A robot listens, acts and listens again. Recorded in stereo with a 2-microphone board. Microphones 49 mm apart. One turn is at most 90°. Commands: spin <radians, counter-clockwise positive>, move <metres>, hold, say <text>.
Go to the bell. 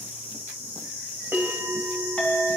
spin -0.87
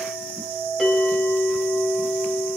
move 1.0
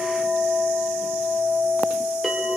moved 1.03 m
hold
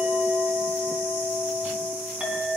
hold
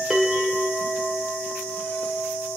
move 1.0
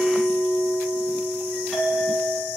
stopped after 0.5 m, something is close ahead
spin -0.26
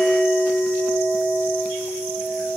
say Arrived at the bell, straight ahead.